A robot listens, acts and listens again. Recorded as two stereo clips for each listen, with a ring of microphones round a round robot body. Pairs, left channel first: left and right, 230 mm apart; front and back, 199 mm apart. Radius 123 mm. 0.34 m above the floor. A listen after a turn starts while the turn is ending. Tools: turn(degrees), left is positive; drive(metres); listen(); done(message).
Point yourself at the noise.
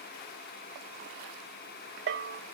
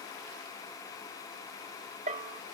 turn(degrees=-125)
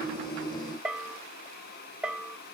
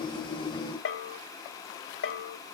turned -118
done("Facing the bell, under 1 m away.")